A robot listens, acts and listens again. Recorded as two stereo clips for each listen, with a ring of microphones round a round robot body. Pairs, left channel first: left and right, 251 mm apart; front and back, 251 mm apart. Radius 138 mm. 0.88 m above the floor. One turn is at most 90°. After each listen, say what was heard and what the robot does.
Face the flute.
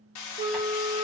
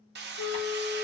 The flute: 35° right. Turn 35° right.
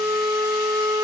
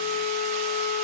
The flute is now 10° right. Turn 10° right.
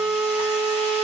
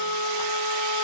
Facing the flute.